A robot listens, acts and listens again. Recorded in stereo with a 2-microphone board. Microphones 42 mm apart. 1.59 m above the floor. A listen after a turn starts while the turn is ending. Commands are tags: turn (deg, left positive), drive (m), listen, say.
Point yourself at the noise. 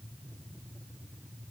<listen/>
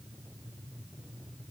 <listen/>
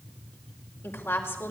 <turn deg="90"/>
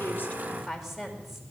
<say>Found it: a woman speaking, straight ahead, over 4 m away.</say>